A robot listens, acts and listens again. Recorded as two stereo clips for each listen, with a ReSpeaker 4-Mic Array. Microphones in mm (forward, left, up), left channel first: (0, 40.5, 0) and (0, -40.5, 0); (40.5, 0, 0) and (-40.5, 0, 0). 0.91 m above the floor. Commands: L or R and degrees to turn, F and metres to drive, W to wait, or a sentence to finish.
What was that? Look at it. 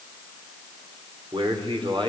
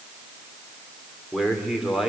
R95
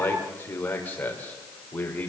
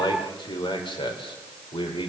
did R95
L15
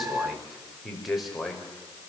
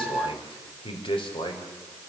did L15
Found it: a man speaking, straight ahead, over 4 m away.